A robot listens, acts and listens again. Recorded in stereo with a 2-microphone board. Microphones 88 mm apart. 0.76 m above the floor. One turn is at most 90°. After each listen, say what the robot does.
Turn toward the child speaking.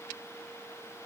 Keep listening.
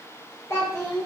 Turn 35° left.
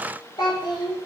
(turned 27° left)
Turn 90° left.
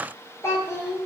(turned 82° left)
Turn 35° left.
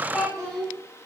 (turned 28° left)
Found it: a child speaking, straight ahead.